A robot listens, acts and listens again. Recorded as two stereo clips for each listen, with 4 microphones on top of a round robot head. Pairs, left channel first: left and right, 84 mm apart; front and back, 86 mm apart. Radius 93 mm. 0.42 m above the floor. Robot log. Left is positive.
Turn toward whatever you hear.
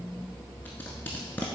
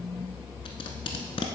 note: The tape being pulled: 15° left.
cmd yaw +15
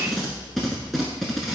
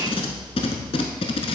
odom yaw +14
end: Found it: tape being pulled, straight ahead.